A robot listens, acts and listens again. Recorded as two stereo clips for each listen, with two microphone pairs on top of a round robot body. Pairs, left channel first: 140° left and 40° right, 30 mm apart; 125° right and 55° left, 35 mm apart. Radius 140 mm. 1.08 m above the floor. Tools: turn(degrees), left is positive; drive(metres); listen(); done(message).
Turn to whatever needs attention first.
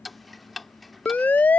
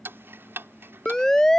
turn(degrees=165)
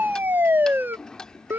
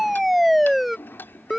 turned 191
turn(degrees=-30)
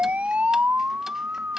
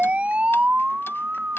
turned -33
done("Found it: a siren, straight ahead.")